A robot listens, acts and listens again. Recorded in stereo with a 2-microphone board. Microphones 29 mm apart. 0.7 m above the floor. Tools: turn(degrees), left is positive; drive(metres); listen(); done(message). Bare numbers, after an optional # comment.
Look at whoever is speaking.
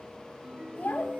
turn(90)
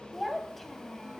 done("Found it: a child speaking, straight ahead.")